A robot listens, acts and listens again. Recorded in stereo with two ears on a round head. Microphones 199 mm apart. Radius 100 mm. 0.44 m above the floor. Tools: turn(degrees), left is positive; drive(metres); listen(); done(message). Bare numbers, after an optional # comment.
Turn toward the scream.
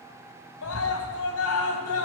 # The scream: about 70° left or 110° left.
turn(70)
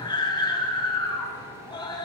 # So it is at 20° left.
turn(20)
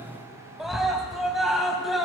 done("Found it: a scream, straight ahead, 2 to 4 m away.")